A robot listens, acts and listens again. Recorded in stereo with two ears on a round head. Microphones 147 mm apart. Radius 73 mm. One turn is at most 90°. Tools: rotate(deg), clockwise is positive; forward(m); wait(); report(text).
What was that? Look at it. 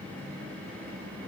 wait()
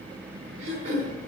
rotate(45)
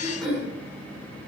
report("Facing the throat clearing, over 4 m away.")